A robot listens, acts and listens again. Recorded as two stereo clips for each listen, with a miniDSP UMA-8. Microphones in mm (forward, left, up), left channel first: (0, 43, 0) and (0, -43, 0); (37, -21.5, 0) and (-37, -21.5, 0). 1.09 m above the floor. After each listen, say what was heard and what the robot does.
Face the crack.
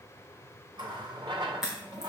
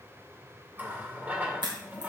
The crack: 175° right. Turn 175° right.
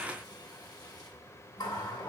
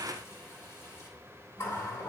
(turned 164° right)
Nothing new. It was at 10° right. Turn 10° right.
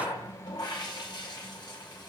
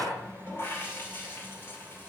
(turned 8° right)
I heard a crack from this way, but can't make it out now.